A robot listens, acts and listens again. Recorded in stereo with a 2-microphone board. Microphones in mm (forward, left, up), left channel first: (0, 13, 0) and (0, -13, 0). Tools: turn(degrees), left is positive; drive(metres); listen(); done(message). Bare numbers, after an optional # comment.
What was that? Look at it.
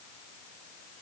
listen()
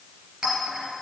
# The clink: about 45° right or 135° right.
turn(-45)
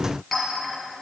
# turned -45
done("Facing the clink, 2 to 4 m away.")